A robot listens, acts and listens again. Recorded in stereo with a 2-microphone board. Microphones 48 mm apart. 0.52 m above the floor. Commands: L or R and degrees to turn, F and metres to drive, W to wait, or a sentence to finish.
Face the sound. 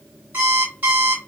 R45
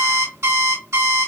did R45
R90
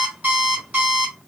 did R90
R30
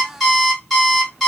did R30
Found it: an alarm clock, straight ahead.